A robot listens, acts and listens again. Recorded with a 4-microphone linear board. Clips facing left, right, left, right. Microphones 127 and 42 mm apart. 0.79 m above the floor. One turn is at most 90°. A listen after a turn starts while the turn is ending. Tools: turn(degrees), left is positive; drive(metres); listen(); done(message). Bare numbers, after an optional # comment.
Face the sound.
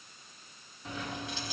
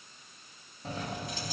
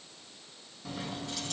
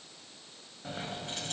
# The keys jangling: about 45° right or 135° right.
turn(-45)
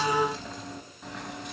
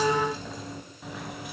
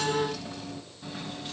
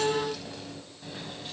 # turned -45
done("Facing the keys jangling, over 4 m away.")